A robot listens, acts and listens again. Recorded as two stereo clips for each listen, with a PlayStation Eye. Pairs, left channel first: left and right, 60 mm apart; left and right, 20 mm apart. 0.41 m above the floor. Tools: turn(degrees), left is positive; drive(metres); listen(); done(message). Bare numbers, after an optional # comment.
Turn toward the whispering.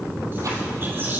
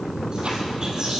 # The whispering: about 40° right or 140° right.
turn(-40)
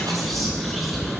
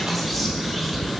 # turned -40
done("Facing the whispering.")